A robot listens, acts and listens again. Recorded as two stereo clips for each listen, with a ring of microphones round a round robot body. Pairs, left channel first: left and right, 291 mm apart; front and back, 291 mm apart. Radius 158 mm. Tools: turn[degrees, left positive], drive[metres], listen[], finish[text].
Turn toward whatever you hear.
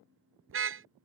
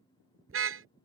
Thought: The car horn: 135° right.
Action: turn[-135]
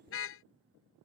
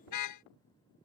Thought: The car horn is now 40° left.
Action: turn[40]
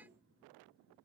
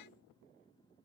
Action: listen[]
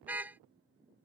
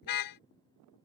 Action: finish[Facing the car horn.]